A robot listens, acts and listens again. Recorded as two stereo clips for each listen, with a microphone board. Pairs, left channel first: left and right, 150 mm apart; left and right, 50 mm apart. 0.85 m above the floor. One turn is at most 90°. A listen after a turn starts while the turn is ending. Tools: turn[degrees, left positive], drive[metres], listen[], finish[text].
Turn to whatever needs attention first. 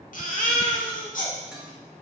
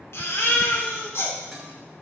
Thought: The baby crying: about 65° left or 115° left.
Action: turn[65]
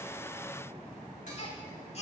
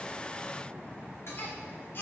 Thought: So it is at 45° left.
Action: turn[45]
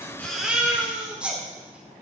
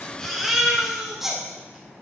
Thought: The baby crying is now 10° right.
Action: turn[-10]
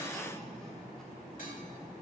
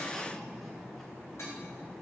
Action: listen[]
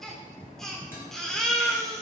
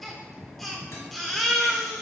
Action: finish[Found it: a baby crying, straight ahead, 1 to 2 m away.]